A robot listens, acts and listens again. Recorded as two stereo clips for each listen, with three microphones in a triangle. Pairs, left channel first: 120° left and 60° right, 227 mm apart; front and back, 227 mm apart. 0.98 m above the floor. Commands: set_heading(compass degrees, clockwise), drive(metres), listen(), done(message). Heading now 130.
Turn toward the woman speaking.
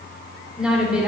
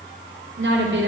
set_heading(275)
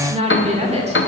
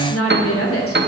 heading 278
done("Found it: a woman speaking, straight ahead, 2 to 4 m away.")